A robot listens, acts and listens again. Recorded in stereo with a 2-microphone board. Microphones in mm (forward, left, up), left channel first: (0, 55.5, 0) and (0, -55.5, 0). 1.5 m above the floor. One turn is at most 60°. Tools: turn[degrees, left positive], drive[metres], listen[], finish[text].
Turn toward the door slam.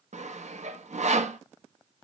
Action: listen[]
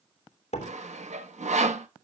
Thought: The door slam: about 70° left or 110° left.
Action: turn[60]
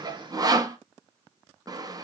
Action: listen[]
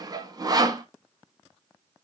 Action: finish[I heard a door slam, but can't make it out now. It was about 10° left or 50° left.]